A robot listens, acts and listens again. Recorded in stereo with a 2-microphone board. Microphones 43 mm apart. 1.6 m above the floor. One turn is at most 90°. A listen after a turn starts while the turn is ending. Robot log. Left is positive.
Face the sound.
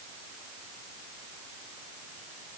cmd idle
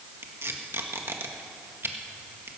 note: The tape being pulled: about 65° right or 115° right.
cmd yaw -65
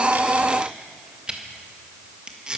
note: So it is at 20° right.
cmd yaw -20
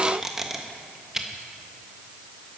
note: The tape being pulled is now 10° right.
cmd yaw -10
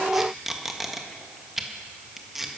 end: Found it: tape being pulled, straight ahead.